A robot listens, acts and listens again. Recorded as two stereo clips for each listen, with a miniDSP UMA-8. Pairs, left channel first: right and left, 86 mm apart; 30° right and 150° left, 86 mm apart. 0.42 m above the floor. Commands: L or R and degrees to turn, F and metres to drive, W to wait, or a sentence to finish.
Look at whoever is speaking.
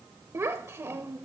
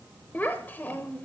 L35
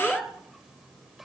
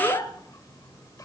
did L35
Facing the child speaking, under 1 m away.